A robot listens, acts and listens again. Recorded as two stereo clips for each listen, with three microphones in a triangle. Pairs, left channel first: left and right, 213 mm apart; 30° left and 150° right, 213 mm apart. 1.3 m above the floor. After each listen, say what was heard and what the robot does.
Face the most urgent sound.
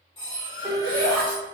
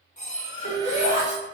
The shout: 115° right. Turn 115° right.
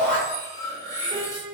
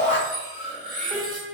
The shout is now 30° right. Turn 30° right.
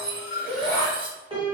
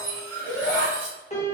Found it: a shout, straight ahead, 1 to 2 m away.